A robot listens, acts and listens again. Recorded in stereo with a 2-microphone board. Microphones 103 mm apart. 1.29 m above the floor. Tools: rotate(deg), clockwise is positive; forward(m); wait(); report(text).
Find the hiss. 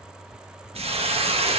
rotate(90)
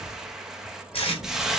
report("Facing the hiss, 1 to 2 m away.")